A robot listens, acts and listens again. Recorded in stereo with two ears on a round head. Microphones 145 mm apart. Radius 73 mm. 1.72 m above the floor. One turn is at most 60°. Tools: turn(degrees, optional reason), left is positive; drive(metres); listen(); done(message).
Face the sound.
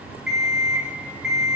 turn(degrees=-30)
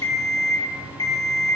turn(degrees=25, reason="So it is at 25° left.")
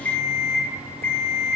turn(degrees=10, reason="The alarm clock is now 10° left.")
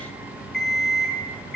done("Found it: an alarm clock, straight ahead.")